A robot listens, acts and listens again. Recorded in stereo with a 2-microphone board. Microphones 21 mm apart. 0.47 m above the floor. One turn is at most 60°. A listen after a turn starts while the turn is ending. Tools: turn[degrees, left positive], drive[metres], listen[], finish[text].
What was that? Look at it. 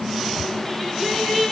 Thought: The singing: about 15° left or 165° left.
Action: turn[15]
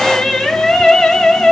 Thought: So it is at 130° left.
Action: turn[60]
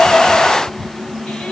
Thought: Nothing new. It was at 70° left.
Action: turn[60]
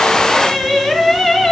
Thought: The singing is now 10° left.
Action: turn[10]
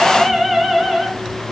Action: finish[Facing the singing, 2 to 4 m away.]